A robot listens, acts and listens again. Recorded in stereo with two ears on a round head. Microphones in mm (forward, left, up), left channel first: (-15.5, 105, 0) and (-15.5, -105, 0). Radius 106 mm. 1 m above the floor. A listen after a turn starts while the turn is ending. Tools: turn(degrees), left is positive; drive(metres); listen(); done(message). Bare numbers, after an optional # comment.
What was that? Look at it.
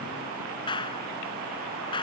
# The clap: about 20° left or 160° left.
turn(20)
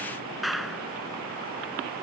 done("Found it: a clap, straight ahead.")